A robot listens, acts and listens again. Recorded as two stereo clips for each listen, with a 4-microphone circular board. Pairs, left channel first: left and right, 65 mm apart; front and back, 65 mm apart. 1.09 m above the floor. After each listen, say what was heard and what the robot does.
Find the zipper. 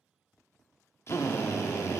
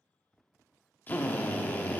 Keep listening.
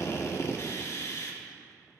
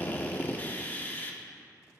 Keep listening.
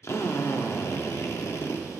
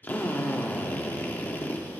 I can't make out a zipper to turn to.